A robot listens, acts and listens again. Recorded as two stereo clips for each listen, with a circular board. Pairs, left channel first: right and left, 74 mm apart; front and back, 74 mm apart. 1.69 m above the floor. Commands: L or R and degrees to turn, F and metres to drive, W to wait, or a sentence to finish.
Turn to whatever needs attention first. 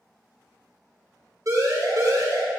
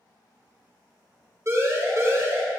L130
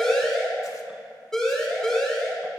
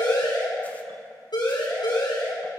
R10
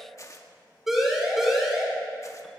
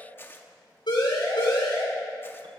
Facing the siren, over 4 m away.